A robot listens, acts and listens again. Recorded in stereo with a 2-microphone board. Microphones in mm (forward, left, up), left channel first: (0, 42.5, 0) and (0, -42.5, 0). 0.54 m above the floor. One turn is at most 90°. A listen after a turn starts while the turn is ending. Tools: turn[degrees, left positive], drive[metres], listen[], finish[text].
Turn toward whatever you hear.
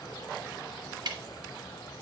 Thought: The ticking: about 60° right or 120° right.
Action: turn[-60]
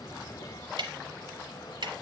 Thought: So it is at 65° right.
Action: turn[-65]
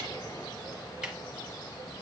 Thought: The ticking is now 10° right.
Action: turn[-10]
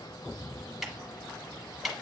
Action: finish[Facing the ticking.]